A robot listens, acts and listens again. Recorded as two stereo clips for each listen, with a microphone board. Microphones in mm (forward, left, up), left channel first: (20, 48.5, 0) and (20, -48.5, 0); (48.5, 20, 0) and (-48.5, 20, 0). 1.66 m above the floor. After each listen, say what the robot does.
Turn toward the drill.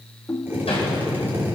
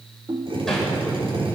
Turn 160° right.
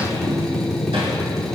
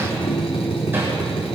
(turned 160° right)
Facing the drill.